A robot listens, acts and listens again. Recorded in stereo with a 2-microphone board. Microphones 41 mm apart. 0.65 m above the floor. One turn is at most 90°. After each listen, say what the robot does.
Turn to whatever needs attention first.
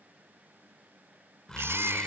Turn 90° right.
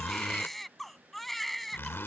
Facing the baby crying.